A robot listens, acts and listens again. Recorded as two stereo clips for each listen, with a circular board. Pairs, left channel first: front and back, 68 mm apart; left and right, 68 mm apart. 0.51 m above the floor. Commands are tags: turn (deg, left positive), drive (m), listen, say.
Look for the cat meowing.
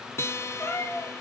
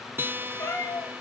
<turn deg="40"/>
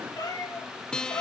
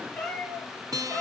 <turn deg="10"/>
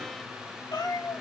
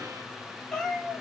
<say>Facing the cat meowing, over 4 m away.</say>